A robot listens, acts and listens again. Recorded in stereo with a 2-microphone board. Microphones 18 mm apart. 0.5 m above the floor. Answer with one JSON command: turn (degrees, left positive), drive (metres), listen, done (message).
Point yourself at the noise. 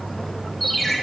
{"turn": 30}
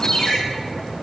{"turn": 150}
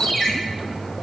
{"turn": 25}
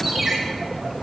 {"done": "Facing the ringtone, 2 to 4 m away."}